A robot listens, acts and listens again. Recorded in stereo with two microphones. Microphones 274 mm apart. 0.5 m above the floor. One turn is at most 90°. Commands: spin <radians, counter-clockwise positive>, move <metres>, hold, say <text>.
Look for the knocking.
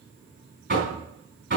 spin -0.79
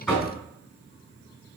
say Found it: knocking, straight ahead, 2 to 4 m away.